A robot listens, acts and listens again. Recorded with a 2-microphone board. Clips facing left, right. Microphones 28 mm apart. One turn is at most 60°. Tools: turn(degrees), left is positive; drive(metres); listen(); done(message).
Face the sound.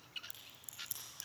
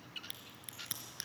turn(degrees=-55)
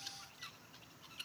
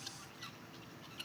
listen()
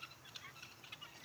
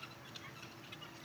done("I heard a crack, but can't make it out now. It was about straight ahead or 70° right.")